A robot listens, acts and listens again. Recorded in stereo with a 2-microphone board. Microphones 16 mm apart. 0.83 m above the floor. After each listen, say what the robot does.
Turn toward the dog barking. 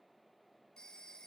Keep listening.
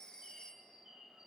Keep listening.
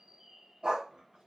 Turn 50° right.
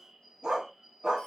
Turn 75° right.
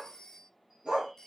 Turn 65° right.
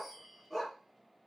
Facing the dog barking.